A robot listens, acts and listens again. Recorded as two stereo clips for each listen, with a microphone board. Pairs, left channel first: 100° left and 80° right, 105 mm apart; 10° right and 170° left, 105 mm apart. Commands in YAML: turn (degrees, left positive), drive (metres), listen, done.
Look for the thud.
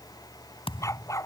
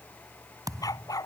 turn: 120
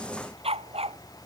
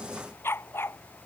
done: "I heard a thud from this way, but can't make it out now."